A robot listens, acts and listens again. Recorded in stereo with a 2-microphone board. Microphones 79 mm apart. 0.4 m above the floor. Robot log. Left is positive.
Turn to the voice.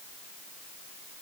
cmd idle
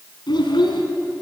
note: The child speaking: about 75° left or 105° left.
cmd yaw +75
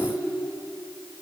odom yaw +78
cmd idle
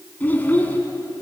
note: So it is at 25° left.
cmd yaw +25
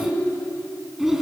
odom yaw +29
end: Found it: a child speaking, straight ahead.